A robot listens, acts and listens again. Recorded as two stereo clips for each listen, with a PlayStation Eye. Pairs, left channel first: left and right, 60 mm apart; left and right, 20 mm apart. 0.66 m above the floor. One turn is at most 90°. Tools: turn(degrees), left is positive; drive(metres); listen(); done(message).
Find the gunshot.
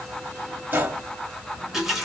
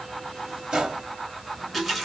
turn(degrees=-30)
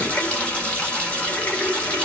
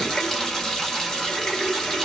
listen()
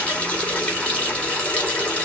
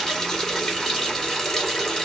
done("I heard a gunshot, but can't make it out now. It was about straight ahead or 120° right.")